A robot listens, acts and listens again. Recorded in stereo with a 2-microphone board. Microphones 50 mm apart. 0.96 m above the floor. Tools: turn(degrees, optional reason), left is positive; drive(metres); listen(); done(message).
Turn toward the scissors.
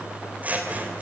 turn(degrees=-30, reason="The scissors: about 30° right or 150° right.")
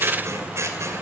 turn(degrees=-120, reason="So it is at 120° right.")
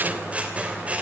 turn(degrees=-25, reason="The scissors is now 25° right.")
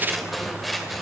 done("Facing the scissors, 2 to 4 m away.")